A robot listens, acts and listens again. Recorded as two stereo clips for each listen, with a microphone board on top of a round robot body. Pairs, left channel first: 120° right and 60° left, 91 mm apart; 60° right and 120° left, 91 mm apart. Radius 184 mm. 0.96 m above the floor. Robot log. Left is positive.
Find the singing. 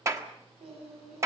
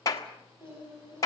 note: The singing: 60° left.
cmd yaw +60
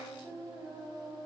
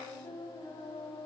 end: Facing the singing.